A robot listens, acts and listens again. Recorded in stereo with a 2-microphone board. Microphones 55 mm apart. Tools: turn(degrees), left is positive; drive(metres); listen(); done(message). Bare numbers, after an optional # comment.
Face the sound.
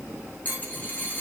# The dropped coin: about 30° left or 150° left.
turn(30)
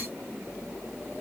listen()
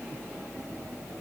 done("I heard a dropped coin, but can't make it out now. It was about straight ahead or 120° left.")